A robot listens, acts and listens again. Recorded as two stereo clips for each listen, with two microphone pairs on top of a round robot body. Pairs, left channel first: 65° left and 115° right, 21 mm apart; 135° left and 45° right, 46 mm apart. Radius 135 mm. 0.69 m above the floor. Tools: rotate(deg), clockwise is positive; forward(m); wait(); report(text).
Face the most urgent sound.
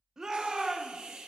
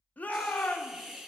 rotate(-180)
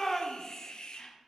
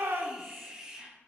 rotate(10)
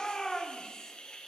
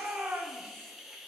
report("Found it: a shout, straight ahead, 1 to 2 m away.")